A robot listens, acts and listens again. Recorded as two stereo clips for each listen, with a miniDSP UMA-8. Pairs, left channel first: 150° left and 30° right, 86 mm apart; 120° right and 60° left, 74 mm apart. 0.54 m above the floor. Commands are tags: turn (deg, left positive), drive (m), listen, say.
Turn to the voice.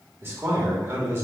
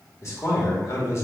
<turn deg="-85"/>
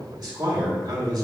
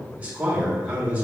<say>Facing the man speaking, 1 to 2 m away.</say>